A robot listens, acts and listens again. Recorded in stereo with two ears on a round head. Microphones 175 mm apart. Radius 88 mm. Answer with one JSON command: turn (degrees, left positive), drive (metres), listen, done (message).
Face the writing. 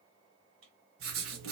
{"turn": -75}
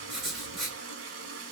{"done": "Facing the writing."}